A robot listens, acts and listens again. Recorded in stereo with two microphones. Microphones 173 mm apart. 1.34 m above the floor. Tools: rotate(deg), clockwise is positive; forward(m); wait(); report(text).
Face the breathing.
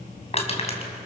wait()
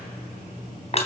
wait()
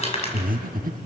rotate(60)
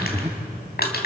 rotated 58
rotate(15)
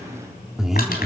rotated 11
report("Facing the breathing, 1 to 2 m away.")